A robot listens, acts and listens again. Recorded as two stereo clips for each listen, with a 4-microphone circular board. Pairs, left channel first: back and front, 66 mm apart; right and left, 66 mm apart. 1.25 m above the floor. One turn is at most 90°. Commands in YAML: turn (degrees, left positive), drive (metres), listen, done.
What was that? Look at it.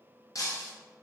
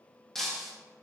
turn: -90
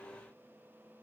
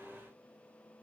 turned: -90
turn: -85
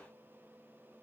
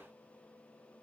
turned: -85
done: "I heard breaking glass from this way, but can't make it out now."